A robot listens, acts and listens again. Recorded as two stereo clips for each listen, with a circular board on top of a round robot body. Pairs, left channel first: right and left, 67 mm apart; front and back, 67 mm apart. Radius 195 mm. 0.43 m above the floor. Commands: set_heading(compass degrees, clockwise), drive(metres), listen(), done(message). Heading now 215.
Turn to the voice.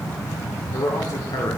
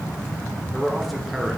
set_heading(305)
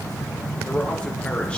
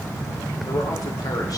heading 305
set_heading(320)
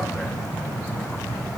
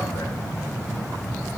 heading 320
listen()
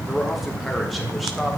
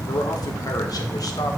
done("Found it: a man speaking, straight ahead.")